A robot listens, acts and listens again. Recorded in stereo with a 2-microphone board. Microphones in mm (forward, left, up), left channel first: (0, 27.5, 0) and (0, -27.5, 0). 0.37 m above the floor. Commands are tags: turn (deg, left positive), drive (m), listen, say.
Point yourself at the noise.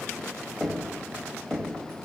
<turn deg="30"/>
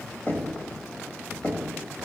<turn deg="135"/>
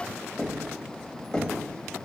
<turn deg="15"/>
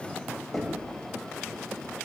<say>Facing the knocking.</say>